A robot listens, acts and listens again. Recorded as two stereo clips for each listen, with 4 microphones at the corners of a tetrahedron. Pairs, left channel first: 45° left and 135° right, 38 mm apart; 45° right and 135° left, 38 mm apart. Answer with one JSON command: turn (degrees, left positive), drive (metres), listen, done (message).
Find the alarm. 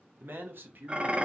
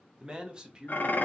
{"listen": true}
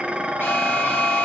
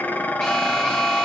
{"turn": 40}
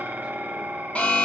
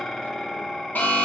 {"done": "Facing the alarm."}